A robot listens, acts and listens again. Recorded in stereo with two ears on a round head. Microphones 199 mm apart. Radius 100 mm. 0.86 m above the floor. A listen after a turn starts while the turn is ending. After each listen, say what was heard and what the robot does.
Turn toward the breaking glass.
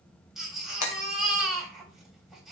The breaking glass: about 75° left or 105° left. Turn 75° left.
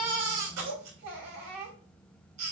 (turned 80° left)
Keep listening.
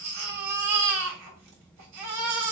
I heard breaking glass, but can't make it out now. It was about 5° right or 25° left.